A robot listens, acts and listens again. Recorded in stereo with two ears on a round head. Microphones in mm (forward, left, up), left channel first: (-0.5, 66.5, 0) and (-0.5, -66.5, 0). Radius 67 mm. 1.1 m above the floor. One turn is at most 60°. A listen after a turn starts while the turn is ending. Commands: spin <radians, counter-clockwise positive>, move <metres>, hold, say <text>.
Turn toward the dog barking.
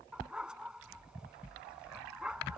spin -0.52
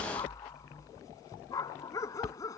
spin 0.44
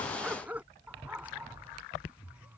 spin -0.17
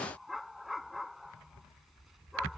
say Found it: a dog barking, straight ahead.